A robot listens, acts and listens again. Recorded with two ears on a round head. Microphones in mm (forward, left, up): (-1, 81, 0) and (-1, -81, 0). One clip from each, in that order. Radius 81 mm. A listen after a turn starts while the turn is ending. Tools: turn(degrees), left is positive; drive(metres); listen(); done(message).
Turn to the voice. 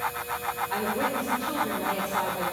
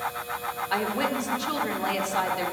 turn(degrees=-65)
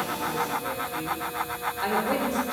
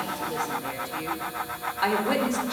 turn(degrees=-35)
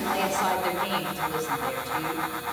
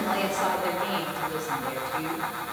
turn(degrees=15)
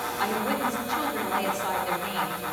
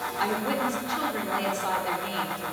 done("Facing the woman speaking, 1 to 2 m away.")